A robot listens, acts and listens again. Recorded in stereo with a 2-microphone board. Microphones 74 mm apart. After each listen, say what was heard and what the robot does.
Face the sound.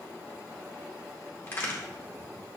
The crack: about 30° left or 150° left. Turn 30° left.
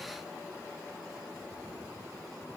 Keep listening.
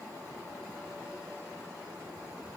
I heard a crack, but can't make it out now. It was about straight ahead or 120° left.